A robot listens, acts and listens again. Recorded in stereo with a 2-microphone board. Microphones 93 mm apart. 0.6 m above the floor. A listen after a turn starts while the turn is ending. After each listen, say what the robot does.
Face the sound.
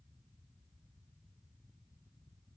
Keep listening.
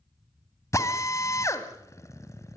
Turn 35° left.
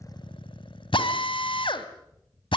Turn 110° left.
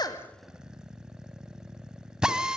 Turn 10° right.
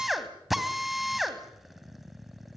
Facing the drill, 2 to 4 m away.